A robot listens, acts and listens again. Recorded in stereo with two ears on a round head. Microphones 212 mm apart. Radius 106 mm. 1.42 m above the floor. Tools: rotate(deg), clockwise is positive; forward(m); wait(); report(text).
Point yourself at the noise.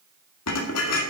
rotate(-90)
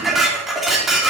report("Facing the dishes clattering.")